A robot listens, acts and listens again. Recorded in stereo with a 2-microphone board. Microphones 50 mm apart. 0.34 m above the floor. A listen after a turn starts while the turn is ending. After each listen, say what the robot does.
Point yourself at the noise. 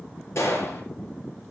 Turn 65° left.
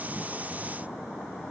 Keep listening.
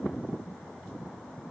I heard a gunshot, but can't make it out now. It was about straight ahead or 50° left.